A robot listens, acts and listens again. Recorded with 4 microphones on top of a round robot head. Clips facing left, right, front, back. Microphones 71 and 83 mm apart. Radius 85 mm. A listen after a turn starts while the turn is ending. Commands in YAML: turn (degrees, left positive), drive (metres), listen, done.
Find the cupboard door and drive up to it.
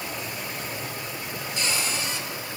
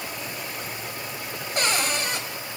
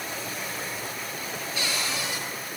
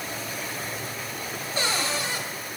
turn: -125
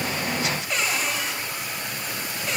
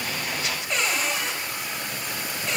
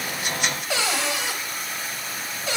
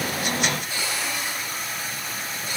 drive: 1.0
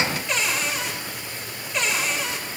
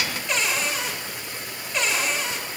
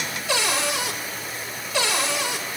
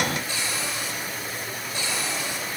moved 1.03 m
drive: 1.0
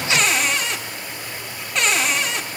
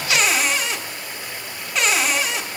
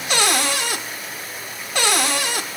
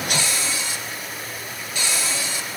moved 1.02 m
drive: 1.0
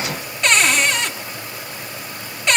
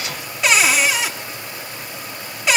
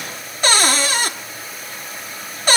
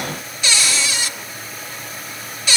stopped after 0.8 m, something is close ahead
done: "I am next to the cupboard door."